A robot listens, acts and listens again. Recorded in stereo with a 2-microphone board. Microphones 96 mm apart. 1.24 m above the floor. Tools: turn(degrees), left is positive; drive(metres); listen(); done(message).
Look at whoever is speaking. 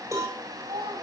turn(degrees=-75)
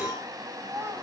turn(degrees=-25)
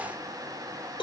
listen()
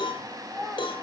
done("Facing the child speaking, over 4 m away.")